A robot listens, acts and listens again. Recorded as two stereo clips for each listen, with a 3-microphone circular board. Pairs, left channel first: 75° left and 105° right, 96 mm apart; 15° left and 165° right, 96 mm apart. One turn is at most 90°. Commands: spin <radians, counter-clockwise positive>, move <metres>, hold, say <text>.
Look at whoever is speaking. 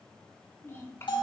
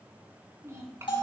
spin 1.57
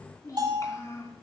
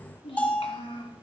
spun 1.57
spin 0.26
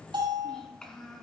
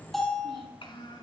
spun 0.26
spin -0.17
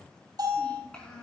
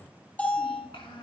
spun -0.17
say Found it: a child speaking, straight ahead.